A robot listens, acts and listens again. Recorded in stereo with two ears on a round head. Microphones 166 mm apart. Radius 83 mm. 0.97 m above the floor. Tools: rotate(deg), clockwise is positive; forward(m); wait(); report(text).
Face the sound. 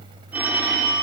rotate(30)
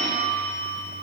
rotate(140)
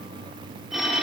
report("Found it: a phone ringing, straight ahead, 1 to 2 m away.")